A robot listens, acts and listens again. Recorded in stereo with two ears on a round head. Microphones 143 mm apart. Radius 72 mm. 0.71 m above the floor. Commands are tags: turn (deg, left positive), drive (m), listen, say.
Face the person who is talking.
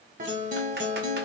<listen/>
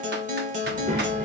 <turn deg="-50"/>
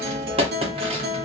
<listen/>
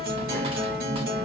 <say>Found it: a child speaking, straight ahead.</say>